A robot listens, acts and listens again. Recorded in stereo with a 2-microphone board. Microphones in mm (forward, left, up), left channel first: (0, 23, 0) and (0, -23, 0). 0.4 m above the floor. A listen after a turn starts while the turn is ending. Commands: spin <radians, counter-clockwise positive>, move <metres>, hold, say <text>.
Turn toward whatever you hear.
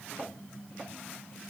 hold
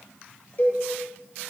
spin 0.87
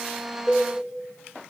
spin 0.17
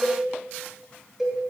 say Facing the cowbell.